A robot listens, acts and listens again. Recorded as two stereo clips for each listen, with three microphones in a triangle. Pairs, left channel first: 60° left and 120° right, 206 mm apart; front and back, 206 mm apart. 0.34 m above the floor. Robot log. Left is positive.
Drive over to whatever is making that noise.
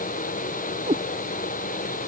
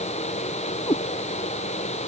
note: The cat meowing: 65° right.
cmd yaw -65
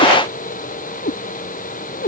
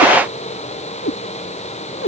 note: The cat meowing is now 20° left.
cmd yaw +20
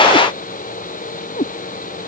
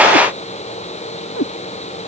cmd fwd 1.0
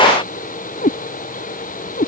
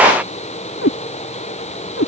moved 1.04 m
note: The cat meowing is now 10° left.
cmd yaw +10
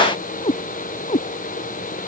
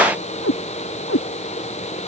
cmd fwd 1.0
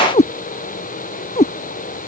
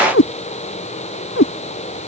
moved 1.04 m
cmd fwd 1.0
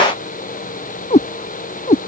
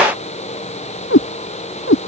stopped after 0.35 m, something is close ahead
end: I am next to the cat meowing.